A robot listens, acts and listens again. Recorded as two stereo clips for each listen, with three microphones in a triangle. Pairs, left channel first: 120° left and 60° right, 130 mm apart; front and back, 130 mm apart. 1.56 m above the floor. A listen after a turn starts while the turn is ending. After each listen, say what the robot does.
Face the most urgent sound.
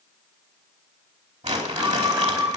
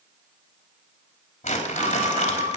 Turn 135° right.
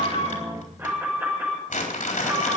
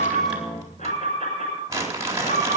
Turn 10° left.
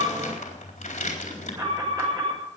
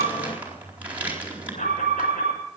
Facing the alarm, over 4 m away.